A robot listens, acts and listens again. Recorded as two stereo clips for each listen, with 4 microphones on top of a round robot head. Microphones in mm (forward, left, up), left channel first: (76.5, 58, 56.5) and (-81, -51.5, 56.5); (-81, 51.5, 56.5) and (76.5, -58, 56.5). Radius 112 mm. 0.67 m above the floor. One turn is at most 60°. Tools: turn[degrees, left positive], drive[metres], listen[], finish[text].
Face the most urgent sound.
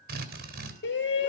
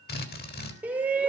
Thought: The shout: 45° left.
Action: turn[45]
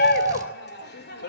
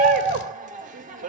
Thought: The shout is now 10° left.
Action: turn[10]
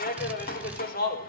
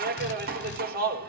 Action: finish[Found it: a shout, straight ahead.]